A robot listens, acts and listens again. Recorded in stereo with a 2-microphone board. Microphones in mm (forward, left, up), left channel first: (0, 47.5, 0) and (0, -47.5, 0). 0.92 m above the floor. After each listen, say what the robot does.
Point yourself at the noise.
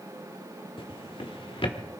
Turn 70° left.
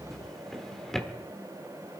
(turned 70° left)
Found it: a drawer, straight ahead.